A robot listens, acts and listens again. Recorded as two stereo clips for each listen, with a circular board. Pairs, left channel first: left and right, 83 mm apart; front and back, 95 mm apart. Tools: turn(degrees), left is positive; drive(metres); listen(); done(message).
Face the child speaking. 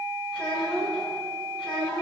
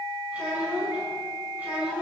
turn(degrees=105)
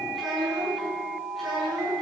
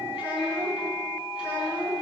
done("Facing the child speaking.")